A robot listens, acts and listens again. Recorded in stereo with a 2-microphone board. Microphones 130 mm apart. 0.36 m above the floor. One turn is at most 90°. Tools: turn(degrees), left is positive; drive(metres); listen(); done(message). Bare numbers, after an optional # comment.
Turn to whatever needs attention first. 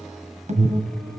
# The alarm: about 70° right or 110° right.
turn(-70)
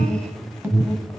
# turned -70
# So it is at 15° right.
turn(-15)
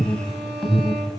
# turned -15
done("Facing the alarm, 1 to 2 m away.")